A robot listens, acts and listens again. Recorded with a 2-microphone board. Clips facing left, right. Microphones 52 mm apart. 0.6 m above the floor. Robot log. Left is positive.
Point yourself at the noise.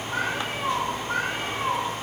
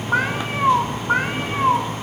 note: The cat meowing: about 40° right or 140° right.
cmd yaw -40
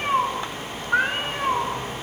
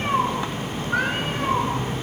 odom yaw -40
note: So it is at 25° left.
cmd yaw +25
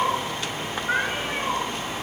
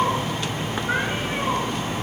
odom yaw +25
end: Facing the cat meowing.